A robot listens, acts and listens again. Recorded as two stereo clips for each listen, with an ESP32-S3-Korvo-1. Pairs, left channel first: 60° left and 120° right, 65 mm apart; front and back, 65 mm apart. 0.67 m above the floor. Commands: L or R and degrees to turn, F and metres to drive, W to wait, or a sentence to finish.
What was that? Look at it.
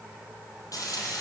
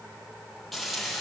L85
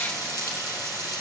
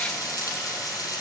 L30
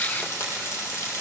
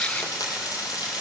L10
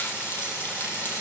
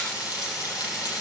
Facing the frying, over 4 m away.